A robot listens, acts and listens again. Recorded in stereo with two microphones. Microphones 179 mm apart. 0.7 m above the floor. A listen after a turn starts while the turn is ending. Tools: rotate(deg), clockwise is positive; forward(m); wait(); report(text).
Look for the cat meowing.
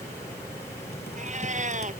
rotate(45)
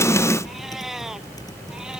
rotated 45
report("Facing the cat meowing.")